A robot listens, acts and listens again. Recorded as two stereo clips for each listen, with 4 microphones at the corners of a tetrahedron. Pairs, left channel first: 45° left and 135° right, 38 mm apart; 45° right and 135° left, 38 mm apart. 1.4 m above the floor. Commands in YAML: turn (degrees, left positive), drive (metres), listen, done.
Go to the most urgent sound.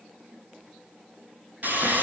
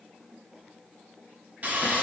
listen: true
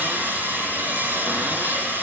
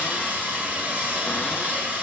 listen: true
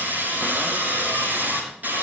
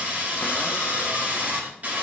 done: "I can't make out anything urgent, only sawing."